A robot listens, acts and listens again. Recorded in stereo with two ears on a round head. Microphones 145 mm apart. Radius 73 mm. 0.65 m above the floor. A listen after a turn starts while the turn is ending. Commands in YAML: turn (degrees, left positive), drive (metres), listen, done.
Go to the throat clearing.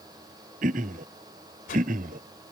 turn: -55
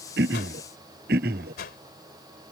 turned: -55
turn: -65
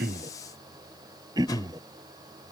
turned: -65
turn: -25
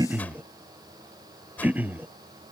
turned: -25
turn: -10
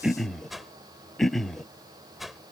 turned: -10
drive: 1.0
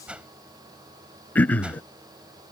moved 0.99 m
turn: 10
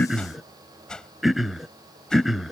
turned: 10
drive: 1.0
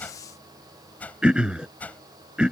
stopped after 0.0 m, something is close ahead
done: "I am next to the throat clearing."